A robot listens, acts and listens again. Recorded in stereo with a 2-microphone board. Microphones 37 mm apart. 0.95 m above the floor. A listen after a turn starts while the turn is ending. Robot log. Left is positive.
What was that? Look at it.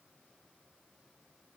cmd idle
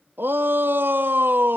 note: The shout: about 75° right or 105° right.
cmd yaw -75
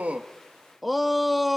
end: Found it: a shout, straight ahead.